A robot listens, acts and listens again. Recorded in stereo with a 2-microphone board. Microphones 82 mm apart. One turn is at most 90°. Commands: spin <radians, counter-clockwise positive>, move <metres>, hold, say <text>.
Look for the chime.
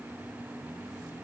hold
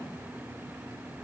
hold
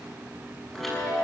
spin 0.52
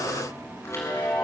spin 1.57
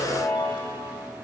spin 1.22
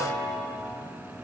spin 0.35
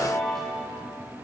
say Found it: a chime, straight ahead.